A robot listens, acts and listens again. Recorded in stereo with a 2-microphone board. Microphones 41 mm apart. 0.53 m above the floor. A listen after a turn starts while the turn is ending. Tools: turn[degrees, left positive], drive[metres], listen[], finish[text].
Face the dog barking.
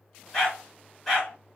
Action: turn[30]
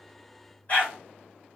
Thought: So it is at 140° left.
Action: turn[140]
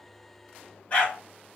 Thought: The dog barking is now 35° left.
Action: turn[35]
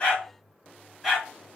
Action: finish[Found it: a dog barking, straight ahead, 1 to 2 m away.]